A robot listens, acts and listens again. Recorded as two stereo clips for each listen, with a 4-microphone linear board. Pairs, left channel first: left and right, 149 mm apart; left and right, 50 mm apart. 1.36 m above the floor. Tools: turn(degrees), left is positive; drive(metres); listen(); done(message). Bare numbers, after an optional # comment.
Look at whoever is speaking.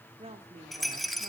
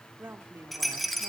# The woman speaking: about 45° right or 135° right.
turn(-45)
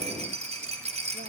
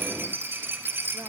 listen()
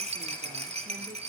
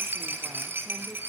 listen()
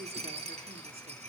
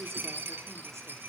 done("I heard a woman speaking, but can't make it out now. It was about straight ahead or 90° right.")